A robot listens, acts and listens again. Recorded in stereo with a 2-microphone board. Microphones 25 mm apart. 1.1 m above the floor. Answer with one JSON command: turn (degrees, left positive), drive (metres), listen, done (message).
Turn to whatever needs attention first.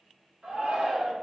{"turn": -75}
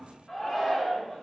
{"done": "Facing the shout, under 1 m away."}